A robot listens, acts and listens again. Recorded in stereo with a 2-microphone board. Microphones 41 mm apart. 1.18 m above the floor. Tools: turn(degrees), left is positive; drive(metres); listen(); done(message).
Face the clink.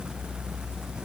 listen()
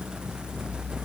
listen()
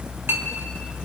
turn(degrees=-90)
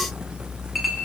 done("Found it: a clink, straight ahead, 1 to 2 m away.")